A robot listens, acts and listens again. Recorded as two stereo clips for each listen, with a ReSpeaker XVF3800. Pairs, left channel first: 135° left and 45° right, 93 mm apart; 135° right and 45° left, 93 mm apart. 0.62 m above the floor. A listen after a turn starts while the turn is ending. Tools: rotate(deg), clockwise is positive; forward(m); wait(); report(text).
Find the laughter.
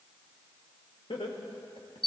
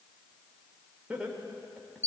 rotate(-125)
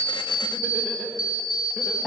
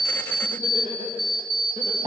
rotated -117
rotate(-10)
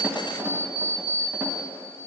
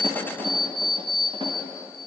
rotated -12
wait()
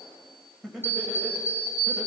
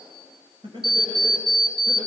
rotate(-35)
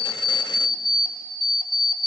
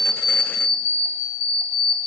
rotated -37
wait()
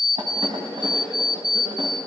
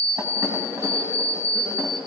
wait()
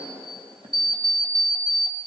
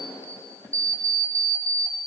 report("Facing the laughter.")